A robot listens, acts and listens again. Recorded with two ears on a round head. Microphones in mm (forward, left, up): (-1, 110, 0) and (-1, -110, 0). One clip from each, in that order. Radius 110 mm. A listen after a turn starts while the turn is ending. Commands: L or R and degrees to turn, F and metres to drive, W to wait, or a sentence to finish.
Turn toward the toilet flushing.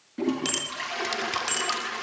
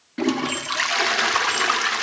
R55
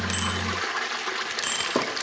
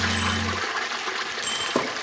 Found it: a toilet flushing, straight ahead.